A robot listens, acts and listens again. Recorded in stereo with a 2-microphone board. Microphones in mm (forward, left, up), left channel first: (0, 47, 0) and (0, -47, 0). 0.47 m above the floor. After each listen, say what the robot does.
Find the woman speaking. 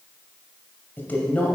Turn 30° left.
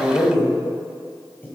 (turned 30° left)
Turn 20° left.
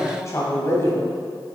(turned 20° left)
Turn 30° left.
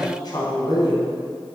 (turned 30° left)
Turn 130° left.
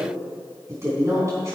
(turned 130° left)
Turn 35° right.
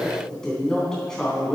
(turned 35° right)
Facing the woman speaking, 2 to 4 m away.